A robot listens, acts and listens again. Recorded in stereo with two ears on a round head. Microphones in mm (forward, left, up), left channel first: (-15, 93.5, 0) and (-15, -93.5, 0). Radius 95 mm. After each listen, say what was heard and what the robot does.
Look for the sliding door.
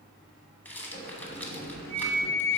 The sliding door: about 45° left or 135° left. Turn 45° left.
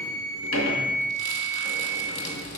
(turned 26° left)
So it is at 105° left. Turn 105° left.
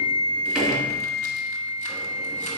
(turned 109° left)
Keep listening.
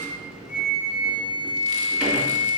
Found it: a sliding door, straight ahead, 2 to 4 m away.